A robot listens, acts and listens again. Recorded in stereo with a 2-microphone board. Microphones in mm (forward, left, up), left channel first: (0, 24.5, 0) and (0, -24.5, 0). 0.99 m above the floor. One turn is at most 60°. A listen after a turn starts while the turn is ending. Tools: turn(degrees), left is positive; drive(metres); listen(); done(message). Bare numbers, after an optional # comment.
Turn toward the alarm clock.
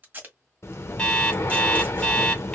# The alarm clock: about 15° left or 165° left.
turn(15)
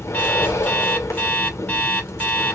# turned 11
# So it is at 150° left.
turn(60)
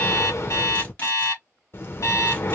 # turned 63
# The alarm clock is now 90° left.
turn(60)
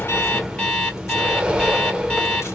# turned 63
# The alarm clock is now 25° left.
turn(25)
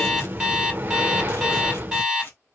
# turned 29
done("Facing the alarm clock, 1 to 2 m away.")